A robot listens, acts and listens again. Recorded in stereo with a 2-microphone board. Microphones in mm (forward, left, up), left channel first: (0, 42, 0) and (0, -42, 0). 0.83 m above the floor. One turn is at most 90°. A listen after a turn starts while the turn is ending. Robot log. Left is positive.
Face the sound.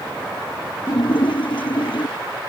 note: The splash: about 70° left or 110° left.
cmd yaw +70
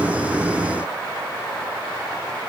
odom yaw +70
cmd idle
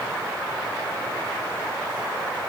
end: I heard a splash, but can't make it out now. It was about straight ahead or 40° left.